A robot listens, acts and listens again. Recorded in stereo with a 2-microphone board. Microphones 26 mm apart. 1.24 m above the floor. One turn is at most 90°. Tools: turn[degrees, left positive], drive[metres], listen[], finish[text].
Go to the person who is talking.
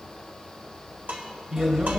Thought: The man speaking: about 35° right or 145° right.
Action: turn[-35]
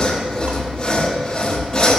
Action: listen[]
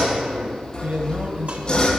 Thought: So it is at 115° right.
Action: turn[-90]
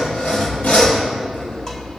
Thought: Nothing new. It was at 25° right.
Action: turn[-25]
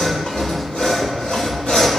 Action: listen[]
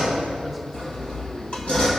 Action: finish[I heard a man speaking from this way, but can't make it out now. I did not reach it.]